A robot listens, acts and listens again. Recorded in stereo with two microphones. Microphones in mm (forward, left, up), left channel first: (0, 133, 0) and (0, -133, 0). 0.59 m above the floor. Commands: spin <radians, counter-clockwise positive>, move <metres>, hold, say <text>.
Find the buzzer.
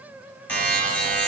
spin 0.52
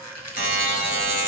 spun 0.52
spin 2.53
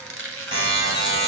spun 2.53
spin -0.26
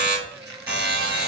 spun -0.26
say Facing the buzzer.